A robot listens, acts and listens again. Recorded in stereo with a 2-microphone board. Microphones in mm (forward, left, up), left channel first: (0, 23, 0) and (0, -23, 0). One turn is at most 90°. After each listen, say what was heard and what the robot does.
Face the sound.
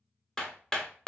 Turn 30° left.
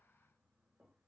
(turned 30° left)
Keep listening.
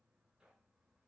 Keep listening.
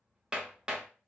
So it is at 15° right. Turn 15° right.
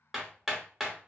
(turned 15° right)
Found it: hammering, straight ahead, under 1 m away.